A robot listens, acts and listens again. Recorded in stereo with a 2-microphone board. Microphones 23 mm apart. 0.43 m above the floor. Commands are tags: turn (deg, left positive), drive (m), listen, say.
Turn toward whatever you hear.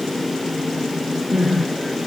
<turn deg="-20"/>
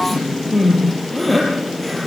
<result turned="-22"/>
<say>Facing the crying, over 4 m away.</say>